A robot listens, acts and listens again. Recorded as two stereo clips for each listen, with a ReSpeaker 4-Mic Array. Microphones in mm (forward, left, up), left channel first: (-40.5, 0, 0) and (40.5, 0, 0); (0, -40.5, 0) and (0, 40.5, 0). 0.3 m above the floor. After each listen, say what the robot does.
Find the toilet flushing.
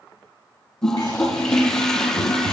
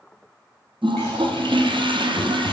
Turn 100° left.
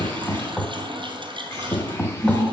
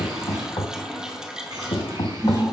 Turn 10° left.
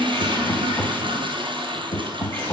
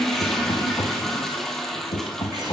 Found it: a toilet flushing, straight ahead.